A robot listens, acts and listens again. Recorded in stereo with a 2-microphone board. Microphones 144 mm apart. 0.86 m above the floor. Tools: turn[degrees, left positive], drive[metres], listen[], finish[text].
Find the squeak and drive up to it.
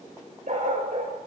Action: listen[]
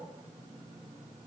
Action: listen[]
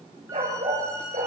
Thought: The squeak: about 20° right or 160° right.
Action: turn[-20]
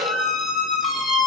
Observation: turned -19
Action: drive[1.0]
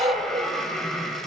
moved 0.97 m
Action: drive[1.0]
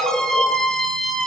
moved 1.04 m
Action: drive[1.0]
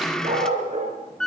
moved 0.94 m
Action: drive[1.0]
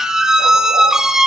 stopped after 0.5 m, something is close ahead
Action: finish[Arrived at the squeak, straight ahead.]